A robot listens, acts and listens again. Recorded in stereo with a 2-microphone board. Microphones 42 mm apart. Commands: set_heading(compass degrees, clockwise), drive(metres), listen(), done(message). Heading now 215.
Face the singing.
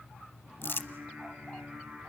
set_heading(240)
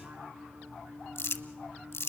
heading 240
set_heading(5)
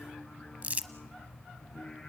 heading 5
done("Found it: singing, straight ahead, over 4 m away.")